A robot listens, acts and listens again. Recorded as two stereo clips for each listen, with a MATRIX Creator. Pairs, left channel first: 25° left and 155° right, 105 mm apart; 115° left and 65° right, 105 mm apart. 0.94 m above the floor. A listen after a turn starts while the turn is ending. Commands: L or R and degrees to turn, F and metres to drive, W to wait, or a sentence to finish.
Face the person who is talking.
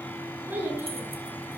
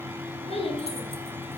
L130
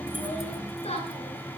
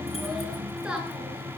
L15
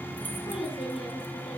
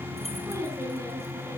Facing the child speaking.